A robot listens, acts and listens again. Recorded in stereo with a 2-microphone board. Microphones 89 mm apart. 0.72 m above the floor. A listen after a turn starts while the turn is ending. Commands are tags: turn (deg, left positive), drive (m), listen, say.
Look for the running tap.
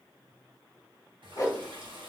<turn deg="-65"/>
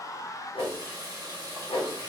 <turn deg="-45"/>
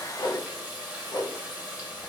<turn deg="-15"/>
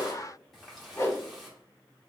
<say>Found it: a running tap, straight ahead.</say>